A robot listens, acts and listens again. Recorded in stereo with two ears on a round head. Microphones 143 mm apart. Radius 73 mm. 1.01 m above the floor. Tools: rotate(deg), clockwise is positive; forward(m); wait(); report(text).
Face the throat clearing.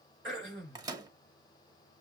rotate(60)
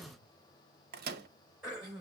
report("Facing the throat clearing.")